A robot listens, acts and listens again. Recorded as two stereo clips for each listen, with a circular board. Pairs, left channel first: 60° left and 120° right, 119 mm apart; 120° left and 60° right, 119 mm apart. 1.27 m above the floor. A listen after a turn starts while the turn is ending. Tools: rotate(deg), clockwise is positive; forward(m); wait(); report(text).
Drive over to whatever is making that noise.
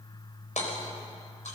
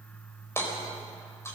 rotate(-50)
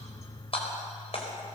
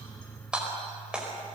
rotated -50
rotate(-20)
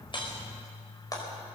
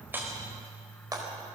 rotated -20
forward(1.0)
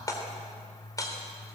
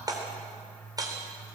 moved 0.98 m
forward(1.0)
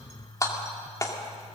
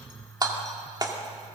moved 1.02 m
forward(1.0)
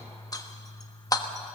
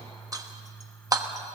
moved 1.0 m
forward(1.0)
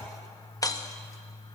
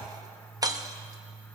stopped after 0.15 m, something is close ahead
report("I am next to the hammering.")